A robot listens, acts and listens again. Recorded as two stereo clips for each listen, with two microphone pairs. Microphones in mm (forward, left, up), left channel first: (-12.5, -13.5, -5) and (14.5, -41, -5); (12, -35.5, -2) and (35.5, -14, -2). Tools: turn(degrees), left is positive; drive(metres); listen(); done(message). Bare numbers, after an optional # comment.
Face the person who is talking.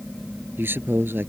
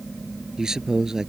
# The man speaking: 30° right.
turn(-30)
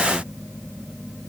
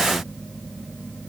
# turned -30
listen()
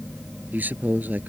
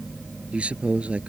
done("Found it: a man speaking, straight ahead.")